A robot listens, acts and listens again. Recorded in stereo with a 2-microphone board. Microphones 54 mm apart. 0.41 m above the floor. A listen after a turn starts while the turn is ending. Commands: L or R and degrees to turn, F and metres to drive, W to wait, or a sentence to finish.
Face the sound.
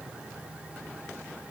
W
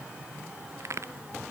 R60
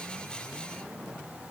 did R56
W
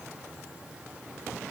I heard a crack, but can't make it out now. It was about 5° right or 60° right.